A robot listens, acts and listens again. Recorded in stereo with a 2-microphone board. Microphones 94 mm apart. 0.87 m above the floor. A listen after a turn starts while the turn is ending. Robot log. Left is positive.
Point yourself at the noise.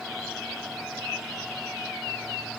cmd idle
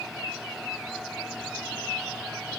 cmd idle
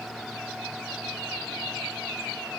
end: I can't make out anything to turn to.